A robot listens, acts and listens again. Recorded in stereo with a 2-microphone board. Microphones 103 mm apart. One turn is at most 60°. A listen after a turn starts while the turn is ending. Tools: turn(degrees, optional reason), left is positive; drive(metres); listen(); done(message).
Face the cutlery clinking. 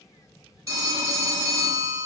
listen()
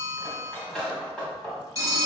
turn(degrees=30)
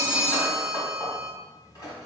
turn(degrees=60, reason="So it is at 140° left.")
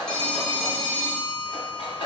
turn(degrees=60, reason="The cutlery clinking is now 120° left.")
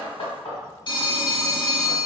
turn(degrees=60, reason="The cutlery clinking is now 70° left.")
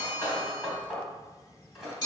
done("Facing the cutlery clinking, 1 to 2 m away.")